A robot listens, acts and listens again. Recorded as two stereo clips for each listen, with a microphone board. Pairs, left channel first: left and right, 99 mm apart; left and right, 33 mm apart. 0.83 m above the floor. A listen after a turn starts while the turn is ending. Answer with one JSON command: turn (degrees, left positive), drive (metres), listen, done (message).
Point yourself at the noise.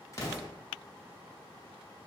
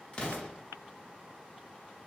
{"turn": 30}
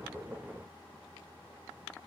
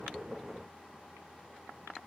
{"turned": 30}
{"listen": true}
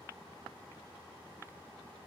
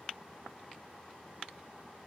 {"done": "I heard an explosion, but can't make it out now. It was about straight ahead or 120° left."}